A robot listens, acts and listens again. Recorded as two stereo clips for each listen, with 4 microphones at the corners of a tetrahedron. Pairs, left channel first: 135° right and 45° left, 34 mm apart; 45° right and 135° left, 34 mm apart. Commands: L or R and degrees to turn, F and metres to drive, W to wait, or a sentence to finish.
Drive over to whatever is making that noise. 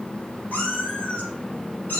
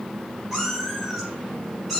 R140
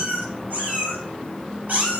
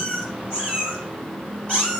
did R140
L10
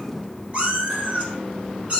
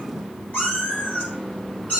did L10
F1.0
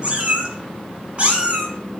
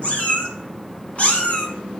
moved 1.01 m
F1.0
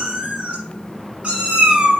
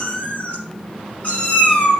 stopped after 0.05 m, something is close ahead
Arrived at the cat meowing, straight ahead.